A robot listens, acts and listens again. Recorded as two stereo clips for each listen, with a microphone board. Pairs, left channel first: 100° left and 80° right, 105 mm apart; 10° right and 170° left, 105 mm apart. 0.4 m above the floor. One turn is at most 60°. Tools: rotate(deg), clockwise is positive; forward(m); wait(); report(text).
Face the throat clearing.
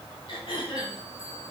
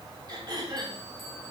rotate(-60)
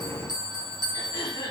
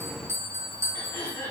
rotate(-50)
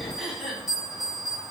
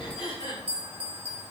rotate(-10)
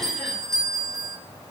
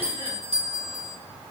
wait()
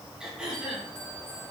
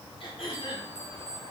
report("Found it: throat clearing, straight ahead.")